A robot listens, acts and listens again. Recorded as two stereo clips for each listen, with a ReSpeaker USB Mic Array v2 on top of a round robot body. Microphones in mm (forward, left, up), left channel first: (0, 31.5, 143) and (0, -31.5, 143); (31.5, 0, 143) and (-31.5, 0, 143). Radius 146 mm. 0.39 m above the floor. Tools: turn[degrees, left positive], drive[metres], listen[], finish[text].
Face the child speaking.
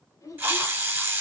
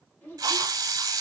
Thought: The child speaking: 60° left.
Action: turn[60]
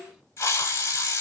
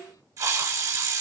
Thought: The child speaking is now 10° right.
Action: turn[-10]
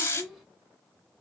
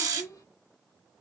Action: finish[Found it: a child speaking, straight ahead.]